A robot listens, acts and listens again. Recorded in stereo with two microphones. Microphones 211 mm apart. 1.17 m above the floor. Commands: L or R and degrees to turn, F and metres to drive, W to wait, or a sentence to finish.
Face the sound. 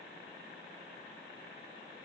W
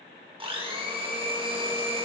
R25
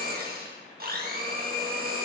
R130
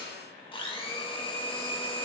L25
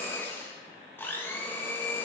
L10
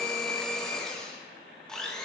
Facing the blender, 1 to 2 m away.